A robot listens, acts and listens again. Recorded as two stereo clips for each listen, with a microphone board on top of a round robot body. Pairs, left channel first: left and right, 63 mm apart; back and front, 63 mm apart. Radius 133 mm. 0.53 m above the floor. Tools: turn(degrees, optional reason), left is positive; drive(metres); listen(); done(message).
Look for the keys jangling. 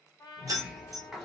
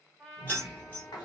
turn(degrees=-120, reason="The keys jangling: 120° right.")
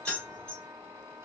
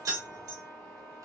turn(degrees=20, reason="The keys jangling is now 20° left.")
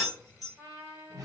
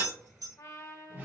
done("Facing the keys jangling.")